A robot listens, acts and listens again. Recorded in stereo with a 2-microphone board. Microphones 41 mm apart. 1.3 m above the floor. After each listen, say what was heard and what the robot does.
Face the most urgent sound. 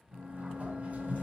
Keep listening.
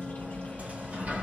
Keep listening.
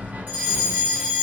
The fire alarm: about 60° right or 120° right. Turn 60° right.
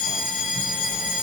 So it is at 25° right. Turn 25° right.
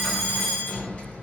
Found it: a fire alarm, straight ahead, 1 to 2 m away.